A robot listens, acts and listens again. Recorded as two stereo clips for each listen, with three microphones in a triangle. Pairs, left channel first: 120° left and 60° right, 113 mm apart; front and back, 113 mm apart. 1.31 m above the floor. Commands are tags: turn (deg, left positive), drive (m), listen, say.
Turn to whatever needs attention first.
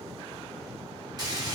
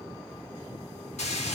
<listen/>
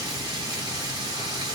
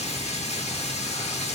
<listen/>
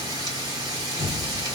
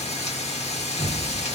<say>I can't make out anything urgent, only a sliding door and frying.</say>